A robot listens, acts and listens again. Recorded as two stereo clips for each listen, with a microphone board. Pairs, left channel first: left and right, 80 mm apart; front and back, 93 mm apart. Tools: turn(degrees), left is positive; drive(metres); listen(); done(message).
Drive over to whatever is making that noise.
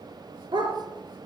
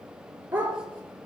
turn(degrees=-110)
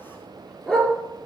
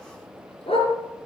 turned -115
drive(metres=1.0)
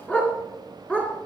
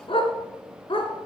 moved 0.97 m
turn(degrees=15)
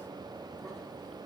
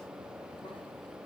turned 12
listen()
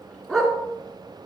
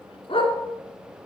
drive(metres=1.0)
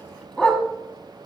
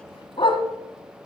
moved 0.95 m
turn(degrees=10)
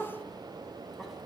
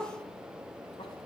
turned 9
listen()
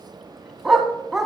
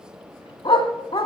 drive(metres=1.0)
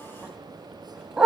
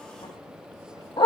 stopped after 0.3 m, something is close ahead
turn(degrees=-10)
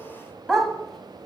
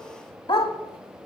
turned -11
done("I am next to the dog barking.")